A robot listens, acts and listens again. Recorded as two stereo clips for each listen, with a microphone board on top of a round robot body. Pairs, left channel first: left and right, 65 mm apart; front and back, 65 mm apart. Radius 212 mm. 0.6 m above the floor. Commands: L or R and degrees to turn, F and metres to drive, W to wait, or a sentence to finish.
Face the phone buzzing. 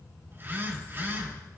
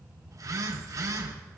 R145
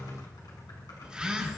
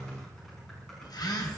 R10
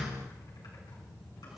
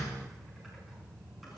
W
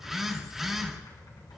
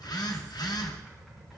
Facing the phone buzzing, 2 to 4 m away.